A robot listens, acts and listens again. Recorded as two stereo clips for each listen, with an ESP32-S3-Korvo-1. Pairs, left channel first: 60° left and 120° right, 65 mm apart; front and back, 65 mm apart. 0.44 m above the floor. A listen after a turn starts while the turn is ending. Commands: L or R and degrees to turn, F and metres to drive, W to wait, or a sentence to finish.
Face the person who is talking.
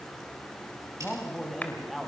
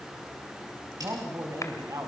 L150
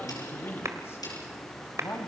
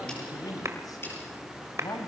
L20
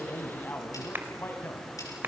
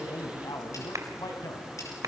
L10
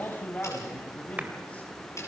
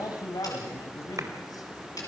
Facing the man speaking, 2 to 4 m away.